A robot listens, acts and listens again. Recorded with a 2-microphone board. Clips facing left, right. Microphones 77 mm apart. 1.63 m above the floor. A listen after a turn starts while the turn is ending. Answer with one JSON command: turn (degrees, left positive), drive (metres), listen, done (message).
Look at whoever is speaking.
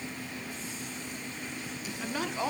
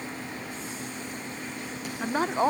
{"turn": -35}
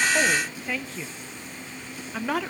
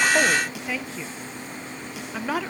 {"done": "Found it: a woman speaking, straight ahead, 1 to 2 m away."}